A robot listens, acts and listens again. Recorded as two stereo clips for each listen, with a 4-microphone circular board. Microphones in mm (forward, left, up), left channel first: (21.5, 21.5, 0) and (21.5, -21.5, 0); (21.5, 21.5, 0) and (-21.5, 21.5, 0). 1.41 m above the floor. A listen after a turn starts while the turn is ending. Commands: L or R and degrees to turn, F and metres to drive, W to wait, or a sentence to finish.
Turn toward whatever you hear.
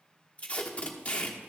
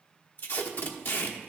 L30
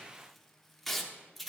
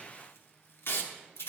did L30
Found it: tape being pulled, straight ahead.